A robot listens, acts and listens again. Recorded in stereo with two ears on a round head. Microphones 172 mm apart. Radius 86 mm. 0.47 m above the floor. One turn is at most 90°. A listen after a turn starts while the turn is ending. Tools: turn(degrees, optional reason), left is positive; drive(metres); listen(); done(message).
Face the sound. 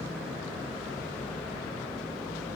listen()
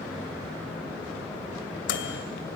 turn(degrees=65, reason="The microwave: about 65° left or 115° left.")
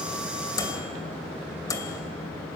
turn(degrees=20, reason="So it is at 20° left.")
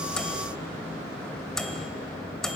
done("Facing the microwave, 2 to 4 m away.")